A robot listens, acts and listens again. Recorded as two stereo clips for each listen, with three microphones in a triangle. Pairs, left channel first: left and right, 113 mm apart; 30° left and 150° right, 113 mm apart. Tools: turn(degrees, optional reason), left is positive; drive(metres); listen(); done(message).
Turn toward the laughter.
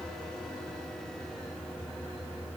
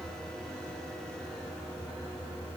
listen()
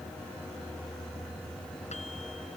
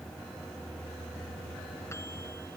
listen()
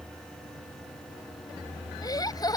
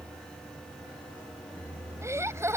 turn(degrees=145, reason="The laughter: 145° left.")
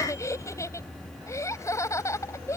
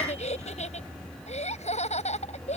turn(degrees=25, reason="The laughter is now 25° left.")
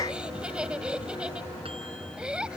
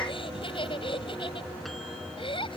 turn(degrees=-10, reason="The laughter is now 10° right.")
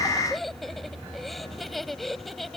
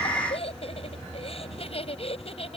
done("Facing the laughter.")